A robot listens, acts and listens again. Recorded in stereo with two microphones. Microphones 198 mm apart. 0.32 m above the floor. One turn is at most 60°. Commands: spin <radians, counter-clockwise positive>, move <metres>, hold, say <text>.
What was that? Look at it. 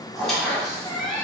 spin 0.52
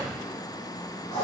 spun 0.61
spin 1.05
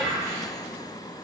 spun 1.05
spin 1.05
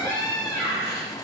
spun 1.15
spin 0.44
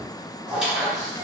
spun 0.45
say Facing the squeak.